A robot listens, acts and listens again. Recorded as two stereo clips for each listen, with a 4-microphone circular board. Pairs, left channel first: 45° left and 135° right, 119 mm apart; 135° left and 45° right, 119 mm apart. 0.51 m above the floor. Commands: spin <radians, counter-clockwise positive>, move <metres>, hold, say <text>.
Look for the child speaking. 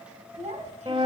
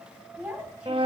spin -2.18
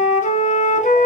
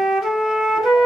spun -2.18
hold
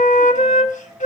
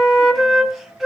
hold
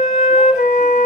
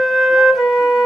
say Facing where the child speaking came from. I can't hear it now.